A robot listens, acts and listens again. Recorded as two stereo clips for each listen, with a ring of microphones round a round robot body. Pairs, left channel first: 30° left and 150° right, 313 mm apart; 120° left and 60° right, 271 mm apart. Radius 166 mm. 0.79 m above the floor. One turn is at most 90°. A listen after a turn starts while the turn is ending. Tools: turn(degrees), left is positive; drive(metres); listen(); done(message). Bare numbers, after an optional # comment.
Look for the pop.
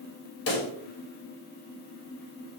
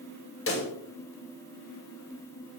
# The pop: 80° left.
turn(80)
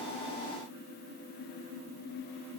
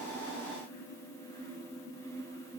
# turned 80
done("Facing where the pop came from. I can't hear it now.")